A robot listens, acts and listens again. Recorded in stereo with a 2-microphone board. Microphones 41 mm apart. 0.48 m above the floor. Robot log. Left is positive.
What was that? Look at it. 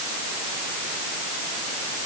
cmd idle
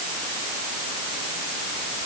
cmd idle
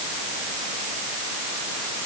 end: I can't make out anything to turn to.